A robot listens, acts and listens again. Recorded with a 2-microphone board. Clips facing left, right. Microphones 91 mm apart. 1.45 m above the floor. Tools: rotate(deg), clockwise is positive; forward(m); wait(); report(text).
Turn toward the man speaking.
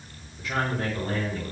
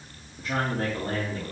rotate(40)
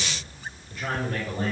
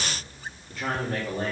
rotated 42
rotate(95)
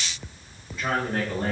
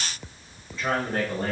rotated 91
rotate(-10)
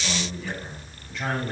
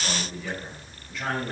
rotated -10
report("Found it: a man speaking, straight ahead.")